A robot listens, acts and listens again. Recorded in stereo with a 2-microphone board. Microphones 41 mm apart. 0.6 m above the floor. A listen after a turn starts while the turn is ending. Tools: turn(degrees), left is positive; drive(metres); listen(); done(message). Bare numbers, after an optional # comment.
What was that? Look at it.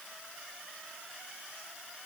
listen()
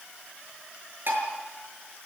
# The dishes clattering: about 55° right or 125° right.
turn(-55)
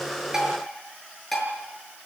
done("Found it: dishes clattering, straight ahead, over 4 m away.")